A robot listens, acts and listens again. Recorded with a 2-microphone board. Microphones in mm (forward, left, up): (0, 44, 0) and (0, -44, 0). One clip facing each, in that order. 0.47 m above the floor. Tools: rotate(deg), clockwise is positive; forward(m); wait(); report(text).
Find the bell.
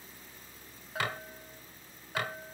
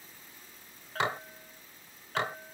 rotate(-30)
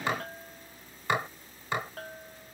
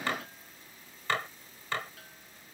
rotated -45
rotate(-125)
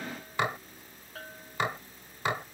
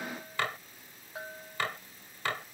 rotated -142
rotate(15)
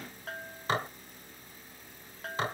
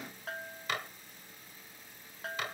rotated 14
report("Found it: a bell, straight ahead.")